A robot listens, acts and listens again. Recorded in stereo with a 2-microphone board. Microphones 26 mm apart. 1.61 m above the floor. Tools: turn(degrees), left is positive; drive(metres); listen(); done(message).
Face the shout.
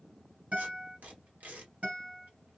listen()
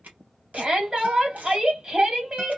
turn(degrees=-35)
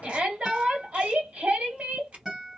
turn(degrees=-110)
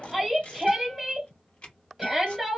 done("Facing the shout, 1 to 2 m away.")